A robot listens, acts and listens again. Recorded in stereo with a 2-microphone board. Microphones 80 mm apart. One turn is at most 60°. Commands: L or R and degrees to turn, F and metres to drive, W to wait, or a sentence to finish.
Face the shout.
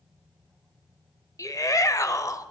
L50
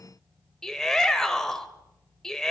L10
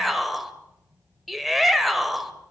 Facing the shout, 1 to 2 m away.